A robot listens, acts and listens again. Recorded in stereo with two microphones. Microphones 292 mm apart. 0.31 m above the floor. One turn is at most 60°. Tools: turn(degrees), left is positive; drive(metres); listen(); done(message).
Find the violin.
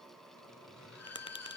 turn(degrees=55)
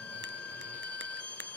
turn(degrees=60)
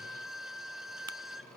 done("Facing the violin.")